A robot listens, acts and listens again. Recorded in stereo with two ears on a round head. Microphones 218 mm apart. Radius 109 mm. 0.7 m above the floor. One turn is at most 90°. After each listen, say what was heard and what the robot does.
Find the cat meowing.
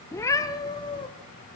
The cat meowing: about 20° left or 160° left. Turn 20° left.
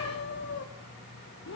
So it is at 125° left. Turn 90° left.
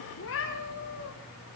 The cat meowing is now 55° left. Turn 55° left.
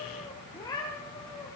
The cat meowing is now 15° left. Turn 15° left.
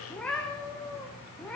Found it: a cat meowing, straight ahead.